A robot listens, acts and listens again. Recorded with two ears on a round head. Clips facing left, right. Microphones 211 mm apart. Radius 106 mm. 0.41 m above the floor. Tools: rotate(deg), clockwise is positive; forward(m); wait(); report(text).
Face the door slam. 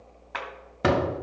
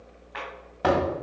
rotate(-30)
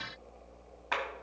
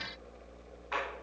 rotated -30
wait()
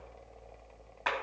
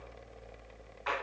report("I heard a door slam, but can't make it out now. It was about straight ahead or 120° left.")